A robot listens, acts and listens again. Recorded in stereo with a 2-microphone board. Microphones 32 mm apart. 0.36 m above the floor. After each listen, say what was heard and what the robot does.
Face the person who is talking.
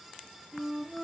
Keep listening.
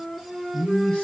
The man speaking: about 25° left or 155° left. Turn 25° left.
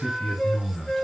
Facing the man speaking, 2 to 4 m away.